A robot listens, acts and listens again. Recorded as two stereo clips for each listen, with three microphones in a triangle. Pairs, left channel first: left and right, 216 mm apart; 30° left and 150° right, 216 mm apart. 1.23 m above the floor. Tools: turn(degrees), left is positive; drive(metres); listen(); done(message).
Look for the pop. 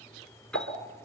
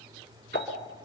turn(degrees=75)
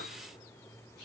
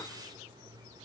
done("Facing where the pop came from. I can't hear it now.")